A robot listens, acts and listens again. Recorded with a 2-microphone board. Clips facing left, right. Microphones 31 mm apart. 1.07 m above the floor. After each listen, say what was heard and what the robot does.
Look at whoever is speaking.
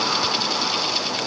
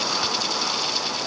Keep listening.
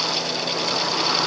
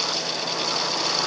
Keep listening.
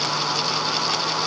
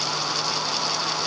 I can't make out anyone speaking to turn to.